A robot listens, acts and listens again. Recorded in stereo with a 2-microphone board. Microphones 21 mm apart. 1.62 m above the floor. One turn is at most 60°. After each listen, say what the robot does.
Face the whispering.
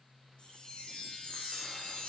Keep listening.
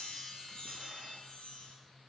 Keep listening.
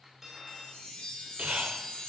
Turn 60° right.
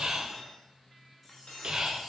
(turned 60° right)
Turn 40° right.
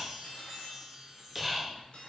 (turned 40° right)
Turn 10° right.
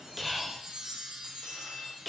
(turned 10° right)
Found it: whispering, straight ahead, 1 to 2 m away.